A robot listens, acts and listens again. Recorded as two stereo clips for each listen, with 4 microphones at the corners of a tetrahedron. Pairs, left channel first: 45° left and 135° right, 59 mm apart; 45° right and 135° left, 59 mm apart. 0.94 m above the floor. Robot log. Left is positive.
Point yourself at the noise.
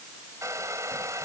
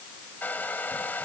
note: The hair dryer: 105° right.
cmd yaw -105
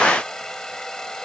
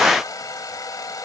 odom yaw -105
note: The hair dryer is now 35° right.
cmd yaw -35
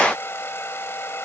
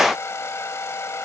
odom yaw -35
end: Facing the hair dryer.